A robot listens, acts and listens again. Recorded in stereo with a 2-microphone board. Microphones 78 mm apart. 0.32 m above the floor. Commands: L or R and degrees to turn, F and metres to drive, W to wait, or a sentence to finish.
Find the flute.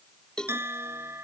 W
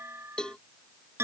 W
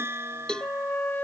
L25
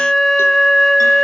Found it: a flute, straight ahead.